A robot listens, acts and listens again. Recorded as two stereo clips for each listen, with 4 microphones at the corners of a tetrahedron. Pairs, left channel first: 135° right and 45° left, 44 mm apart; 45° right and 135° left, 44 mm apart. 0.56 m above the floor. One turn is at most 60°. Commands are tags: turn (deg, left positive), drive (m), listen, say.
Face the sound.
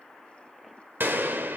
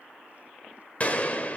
<turn deg="10"/>
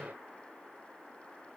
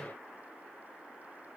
<say>Facing where the gunshot came from. I can't hear it now.</say>